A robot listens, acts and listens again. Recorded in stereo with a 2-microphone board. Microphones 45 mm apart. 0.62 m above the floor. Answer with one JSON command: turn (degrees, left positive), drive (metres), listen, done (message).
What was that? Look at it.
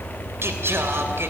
{"turn": -70}
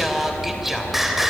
{"turn": -10}
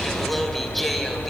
{"done": "Facing the singing, 2 to 4 m away."}